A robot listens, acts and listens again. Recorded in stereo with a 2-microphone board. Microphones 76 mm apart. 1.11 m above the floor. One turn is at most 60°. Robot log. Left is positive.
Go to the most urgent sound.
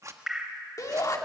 note: The shout: about 50° left or 130° left.
cmd yaw +50
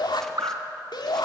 note: So it is at 80° left.
cmd yaw +60
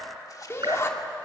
note: The shout is now 40° left.
cmd yaw +40
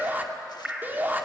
note: The shout is now 25° right.
cmd yaw -25
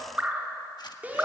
note: The shout is now 20° right.
cmd yaw -20
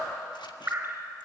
cmd idle
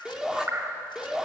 cmd fwd 1.0
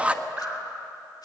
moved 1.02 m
note: The shout is now 15° right.
cmd yaw -15
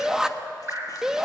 cmd fwd 1.0
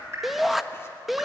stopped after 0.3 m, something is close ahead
end: Arrived at the shout, straight ahead.